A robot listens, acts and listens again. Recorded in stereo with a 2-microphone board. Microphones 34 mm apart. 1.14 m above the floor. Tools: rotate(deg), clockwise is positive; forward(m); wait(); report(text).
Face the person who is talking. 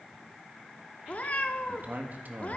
rotate(55)
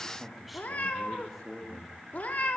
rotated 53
report("Facing the man speaking, 1 to 2 m away.")